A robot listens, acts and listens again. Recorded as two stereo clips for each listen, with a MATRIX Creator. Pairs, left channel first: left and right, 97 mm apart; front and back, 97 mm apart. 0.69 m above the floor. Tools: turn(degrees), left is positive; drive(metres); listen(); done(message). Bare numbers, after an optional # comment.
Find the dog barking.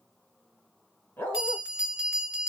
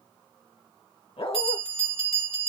# The dog barking: 20° left.
turn(20)
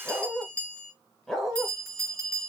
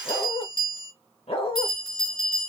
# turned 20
done("Found it: a dog barking, straight ahead.")